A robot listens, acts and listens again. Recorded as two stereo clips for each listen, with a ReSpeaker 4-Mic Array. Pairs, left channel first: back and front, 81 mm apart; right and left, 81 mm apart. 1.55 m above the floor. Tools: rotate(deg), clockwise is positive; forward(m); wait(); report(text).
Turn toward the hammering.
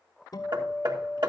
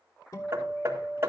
rotate(-30)
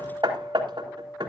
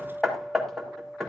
report("Found it: hammering, straight ahead.")